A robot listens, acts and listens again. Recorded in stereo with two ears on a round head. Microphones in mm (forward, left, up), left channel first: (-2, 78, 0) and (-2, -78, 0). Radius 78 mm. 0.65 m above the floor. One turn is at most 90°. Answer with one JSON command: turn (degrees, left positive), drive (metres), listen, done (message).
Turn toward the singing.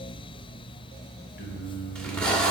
{"turn": 65}
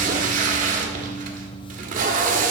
{"turn": 55}
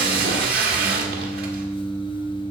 {"turn": 20}
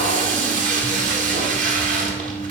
{"done": "Facing the singing, over 4 m away."}